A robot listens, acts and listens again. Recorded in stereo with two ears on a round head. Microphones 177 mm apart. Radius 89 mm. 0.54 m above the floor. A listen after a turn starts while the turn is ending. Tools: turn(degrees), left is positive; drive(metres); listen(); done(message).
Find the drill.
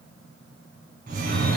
listen()
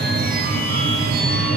listen()
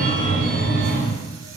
done("I can't make out a drill, only a phone ringing.")